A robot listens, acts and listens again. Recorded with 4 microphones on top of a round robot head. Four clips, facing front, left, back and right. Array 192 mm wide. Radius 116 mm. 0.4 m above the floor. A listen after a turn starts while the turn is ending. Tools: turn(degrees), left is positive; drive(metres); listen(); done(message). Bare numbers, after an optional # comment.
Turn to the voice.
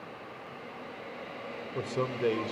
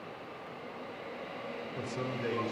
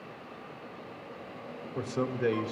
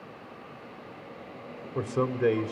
# The man speaking: 75° right.
turn(-75)
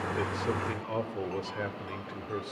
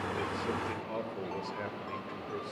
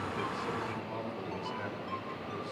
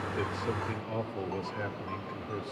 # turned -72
done("Facing the man speaking.")